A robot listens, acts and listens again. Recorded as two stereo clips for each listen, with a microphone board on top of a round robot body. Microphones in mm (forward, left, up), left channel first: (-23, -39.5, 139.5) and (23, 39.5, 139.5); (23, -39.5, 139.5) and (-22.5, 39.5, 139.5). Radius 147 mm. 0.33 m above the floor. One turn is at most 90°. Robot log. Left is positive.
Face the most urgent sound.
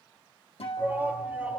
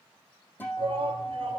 note: The shout: 130° left.
cmd yaw +90
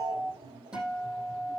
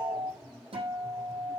note: Nothing new. It was at 40° left.
cmd yaw +40
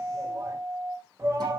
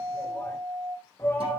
end: Facing the shout, 2 to 4 m away.